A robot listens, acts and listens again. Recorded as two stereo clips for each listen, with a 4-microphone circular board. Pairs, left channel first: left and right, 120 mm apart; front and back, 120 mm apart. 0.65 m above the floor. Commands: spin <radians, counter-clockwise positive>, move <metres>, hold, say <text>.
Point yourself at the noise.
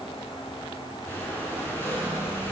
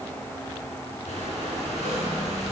spin 0.35
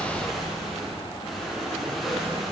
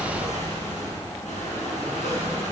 say Facing the breathing.